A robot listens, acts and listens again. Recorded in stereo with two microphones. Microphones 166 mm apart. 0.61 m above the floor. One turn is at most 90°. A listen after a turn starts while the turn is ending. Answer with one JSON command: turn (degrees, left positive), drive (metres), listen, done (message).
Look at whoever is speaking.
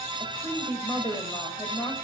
{"turn": 20}
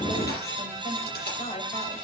{"turn": 90}
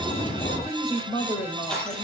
{"turn": 40}
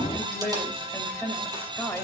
{"turn": 10}
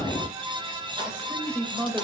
{"done": "Found it: a woman speaking, straight ahead."}